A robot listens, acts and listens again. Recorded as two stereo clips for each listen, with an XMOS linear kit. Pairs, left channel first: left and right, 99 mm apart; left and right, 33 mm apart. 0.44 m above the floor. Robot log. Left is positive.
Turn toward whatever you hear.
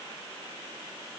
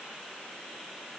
cmd idle
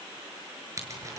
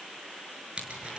note: The scissors: about 30° right or 150° right.
cmd yaw -30
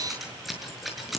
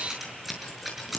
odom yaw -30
end: Facing the scissors.